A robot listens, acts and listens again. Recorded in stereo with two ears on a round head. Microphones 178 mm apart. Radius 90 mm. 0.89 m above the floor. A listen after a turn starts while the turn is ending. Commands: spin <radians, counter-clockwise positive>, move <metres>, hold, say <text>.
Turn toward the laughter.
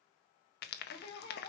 spin 0.44
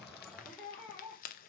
say Facing the laughter.